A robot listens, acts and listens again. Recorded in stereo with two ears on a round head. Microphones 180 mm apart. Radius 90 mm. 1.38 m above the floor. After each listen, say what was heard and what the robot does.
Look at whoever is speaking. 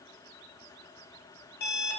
Keep listening.
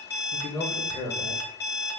The man speaking: about 20° left or 160° left. Turn 20° left.
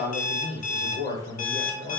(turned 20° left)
So it is at 140° left. Turn 140° left.
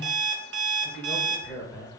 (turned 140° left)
The man speaking is now 10° right. Turn 10° right.
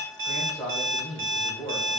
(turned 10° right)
Found it: a man speaking, straight ahead.